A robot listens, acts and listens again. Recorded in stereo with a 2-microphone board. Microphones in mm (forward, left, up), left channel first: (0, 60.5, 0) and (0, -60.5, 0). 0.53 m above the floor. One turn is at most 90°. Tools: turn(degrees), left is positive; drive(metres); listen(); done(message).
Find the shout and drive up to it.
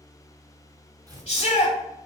turn(degrees=50)
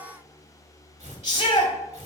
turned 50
turn(degrees=75)
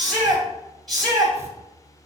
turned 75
drive(metres=1.0)
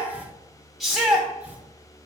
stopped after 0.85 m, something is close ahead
done("I am next to the shout.")